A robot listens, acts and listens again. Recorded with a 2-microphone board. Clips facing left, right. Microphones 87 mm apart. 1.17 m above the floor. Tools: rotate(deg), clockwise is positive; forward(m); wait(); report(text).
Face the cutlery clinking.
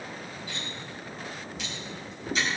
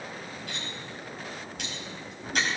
rotate(65)
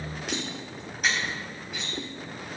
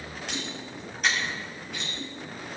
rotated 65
report("Facing the cutlery clinking.")